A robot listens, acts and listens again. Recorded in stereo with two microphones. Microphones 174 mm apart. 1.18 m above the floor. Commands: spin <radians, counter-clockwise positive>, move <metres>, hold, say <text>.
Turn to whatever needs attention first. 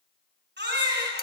spin -1.57
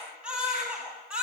say Found it: a baby crying, straight ahead, over 4 m away.